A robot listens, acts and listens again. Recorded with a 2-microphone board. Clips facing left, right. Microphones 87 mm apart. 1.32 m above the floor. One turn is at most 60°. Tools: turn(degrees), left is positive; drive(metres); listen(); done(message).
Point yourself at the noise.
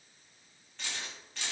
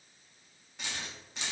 turn(degrees=-20)
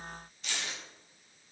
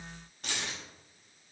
turn(degrees=-60)
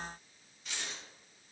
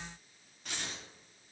turn(degrees=-50)
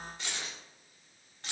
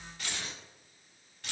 turn(degrees=30)
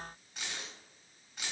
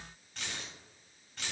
turn(degrees=10)
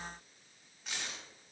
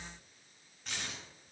done("Facing the keys jangling.")